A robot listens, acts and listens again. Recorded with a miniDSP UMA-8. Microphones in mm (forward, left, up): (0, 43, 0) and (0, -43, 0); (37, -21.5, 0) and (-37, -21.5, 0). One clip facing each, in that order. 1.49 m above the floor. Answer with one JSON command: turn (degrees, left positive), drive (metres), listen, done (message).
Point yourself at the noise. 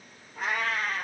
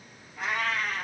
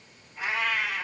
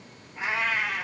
{"turn": 120}
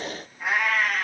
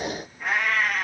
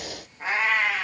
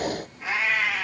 {"done": "Found it: a cat meowing, straight ahead."}